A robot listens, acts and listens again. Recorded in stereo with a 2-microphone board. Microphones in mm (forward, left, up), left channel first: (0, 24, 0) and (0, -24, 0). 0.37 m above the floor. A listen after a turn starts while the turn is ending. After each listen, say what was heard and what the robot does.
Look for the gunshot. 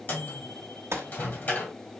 The gunshot: about 70° right or 110° right. Turn 70° right.
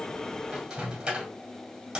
Keep listening.
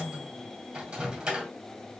I heard a gunshot, but can't make it out now. It was about straight ahead or 40° right.